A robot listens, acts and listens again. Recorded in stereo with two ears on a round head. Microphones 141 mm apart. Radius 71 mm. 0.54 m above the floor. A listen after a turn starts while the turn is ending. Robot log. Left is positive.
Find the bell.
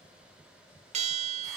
note: The bell: about 45° right or 135° right.
cmd yaw -45
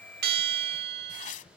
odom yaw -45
note: So it is at 85° right.
cmd yaw -85
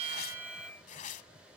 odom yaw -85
cmd idle
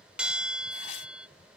end: Found it: a bell, straight ahead.